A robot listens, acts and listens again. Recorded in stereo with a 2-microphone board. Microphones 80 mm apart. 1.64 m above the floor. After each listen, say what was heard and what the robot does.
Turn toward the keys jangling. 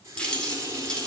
Turn 30° left.
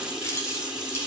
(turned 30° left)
So it is at 145° left. Turn 145° left.
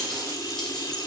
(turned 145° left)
Keep listening.
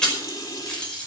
The keys jangling is now 10° left. Turn 10° left.
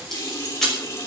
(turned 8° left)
Facing the keys jangling, over 4 m away.